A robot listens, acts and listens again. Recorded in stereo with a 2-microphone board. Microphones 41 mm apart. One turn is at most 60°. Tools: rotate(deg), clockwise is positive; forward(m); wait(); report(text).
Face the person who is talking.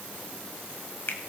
wait()
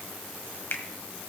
wait()
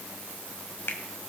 report("I can't make out anyone speaking to turn to.")